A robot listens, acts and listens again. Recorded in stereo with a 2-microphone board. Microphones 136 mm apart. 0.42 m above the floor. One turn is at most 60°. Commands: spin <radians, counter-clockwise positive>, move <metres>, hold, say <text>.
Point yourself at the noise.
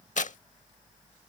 spin 1.05
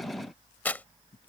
spin 0.26
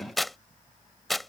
say Found it: tearing paper, straight ahead.